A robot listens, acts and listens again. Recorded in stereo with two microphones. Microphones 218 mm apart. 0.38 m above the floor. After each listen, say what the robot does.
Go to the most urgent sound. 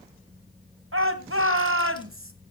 Turn 65° right.
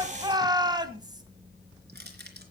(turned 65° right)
Turn 20° right.
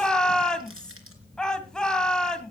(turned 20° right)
Drive 1.0 m forward.
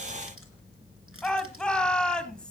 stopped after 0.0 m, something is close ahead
Something is in my way. I am facing the shout but have not reached it.